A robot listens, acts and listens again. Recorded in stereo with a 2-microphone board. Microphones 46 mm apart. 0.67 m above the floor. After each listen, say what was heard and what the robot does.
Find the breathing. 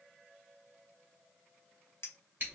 Keep listening.
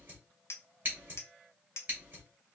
Keep listening.
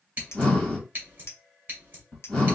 Turn 30° left.
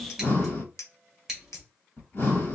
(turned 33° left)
So it is at 135° left. Turn 135° left.
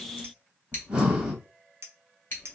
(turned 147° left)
The breathing is now 10° right. Turn 10° right.
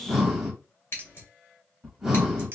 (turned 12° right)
Found it: breathing, straight ahead, 1 to 2 m away.